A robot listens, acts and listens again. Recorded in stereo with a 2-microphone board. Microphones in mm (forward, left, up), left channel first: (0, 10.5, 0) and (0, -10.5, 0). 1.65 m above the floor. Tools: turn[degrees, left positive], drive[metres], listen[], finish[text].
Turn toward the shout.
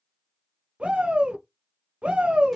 Thought: The shout: about 70° right or 110° right.
Action: turn[-70]
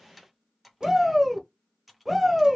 Action: finish[Found it: a shout, straight ahead.]